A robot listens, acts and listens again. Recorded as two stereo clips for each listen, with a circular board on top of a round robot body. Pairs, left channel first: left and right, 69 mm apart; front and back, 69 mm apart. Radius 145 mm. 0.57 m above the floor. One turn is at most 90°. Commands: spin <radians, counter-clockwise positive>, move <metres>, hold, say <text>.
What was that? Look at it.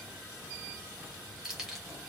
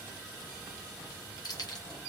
say Facing the keys jangling.